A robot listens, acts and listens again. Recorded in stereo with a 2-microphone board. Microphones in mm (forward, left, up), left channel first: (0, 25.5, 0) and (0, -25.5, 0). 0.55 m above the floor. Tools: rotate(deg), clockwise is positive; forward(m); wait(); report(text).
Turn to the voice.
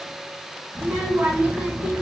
rotate(35)
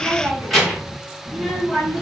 report("Facing the child speaking, 2 to 4 m away.")